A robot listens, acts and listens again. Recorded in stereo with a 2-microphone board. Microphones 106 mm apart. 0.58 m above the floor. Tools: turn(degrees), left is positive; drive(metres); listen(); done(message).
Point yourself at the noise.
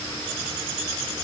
listen()
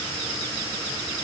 listen()
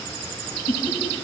turn(degrees=-70)
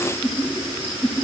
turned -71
turn(degrees=-25)
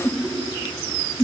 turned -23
done("Facing the laughter.")